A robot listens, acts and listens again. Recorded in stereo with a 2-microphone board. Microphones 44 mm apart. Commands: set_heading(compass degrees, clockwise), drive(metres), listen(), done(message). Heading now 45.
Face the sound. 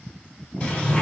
set_heading(20)
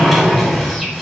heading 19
done("Facing the sliding door.")